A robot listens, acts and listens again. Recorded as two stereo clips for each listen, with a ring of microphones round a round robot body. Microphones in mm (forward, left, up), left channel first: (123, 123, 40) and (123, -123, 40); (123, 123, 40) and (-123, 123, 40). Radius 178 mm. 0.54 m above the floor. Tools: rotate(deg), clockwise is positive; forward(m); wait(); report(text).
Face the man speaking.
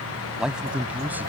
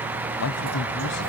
report("Facing the man speaking.")